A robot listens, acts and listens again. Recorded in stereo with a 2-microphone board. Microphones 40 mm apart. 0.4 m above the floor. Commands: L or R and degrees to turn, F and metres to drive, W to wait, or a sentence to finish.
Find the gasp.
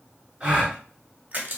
R25
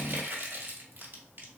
W
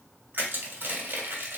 I heard a gasp, but can't make it out now. It was about straight ahead or 130° right.